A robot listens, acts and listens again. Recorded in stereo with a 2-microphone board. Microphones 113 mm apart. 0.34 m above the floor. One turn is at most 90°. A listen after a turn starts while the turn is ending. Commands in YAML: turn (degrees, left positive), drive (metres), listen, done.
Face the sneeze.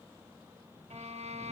listen: true
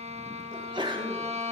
turn: -45
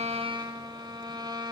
listen: true
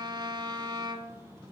done: "I heard a sneeze, but can't make it out now. It was about straight ahead or 90° right."